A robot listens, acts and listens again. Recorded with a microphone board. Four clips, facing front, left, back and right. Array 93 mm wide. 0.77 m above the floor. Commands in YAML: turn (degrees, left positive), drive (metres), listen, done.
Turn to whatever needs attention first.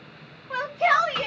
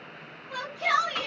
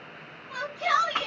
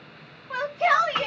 turn: -45
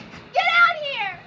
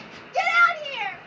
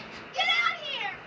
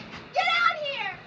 turn: 15
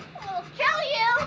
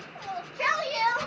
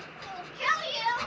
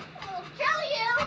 turn: 10
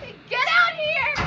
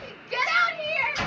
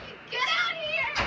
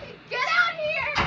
done: "Found it: a shout, straight ahead."